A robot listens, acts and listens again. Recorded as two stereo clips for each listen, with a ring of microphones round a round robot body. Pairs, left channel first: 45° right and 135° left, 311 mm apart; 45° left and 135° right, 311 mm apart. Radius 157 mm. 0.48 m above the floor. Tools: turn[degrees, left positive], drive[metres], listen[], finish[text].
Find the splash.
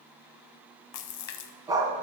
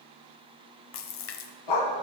Action: finish[Facing the splash, under 1 m away.]